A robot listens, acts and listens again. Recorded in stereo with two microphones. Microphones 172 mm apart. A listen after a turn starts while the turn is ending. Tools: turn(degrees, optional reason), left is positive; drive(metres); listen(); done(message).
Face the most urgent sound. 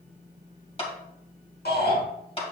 turn(degrees=75, reason="The shout: about 75° left or 105° left.")
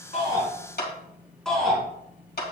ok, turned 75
done("Facing the shout, over 4 m away.")